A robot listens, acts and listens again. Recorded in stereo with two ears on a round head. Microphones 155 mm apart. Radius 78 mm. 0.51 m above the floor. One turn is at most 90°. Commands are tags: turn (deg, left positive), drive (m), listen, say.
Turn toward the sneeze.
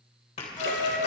<turn deg="40"/>
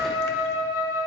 <listen/>
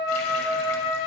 <say>I heard a sneeze, but can't make it out now. It was about straight ahead or 100° left.</say>